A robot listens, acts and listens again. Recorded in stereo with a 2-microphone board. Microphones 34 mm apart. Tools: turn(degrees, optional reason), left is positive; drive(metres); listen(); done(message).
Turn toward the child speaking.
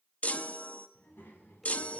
turn(degrees=90)
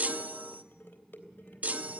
turn(degrees=-10, reason="So it is at 10° right.")
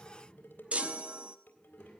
done("Found it: a child speaking, straight ahead.")